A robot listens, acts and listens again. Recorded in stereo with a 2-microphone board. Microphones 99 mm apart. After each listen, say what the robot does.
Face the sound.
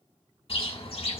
Turn 60° left.
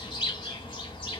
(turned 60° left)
Turn 50° left.
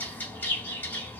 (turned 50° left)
Turn 20° left.
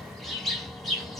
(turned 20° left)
Found it: a bird, straight ahead.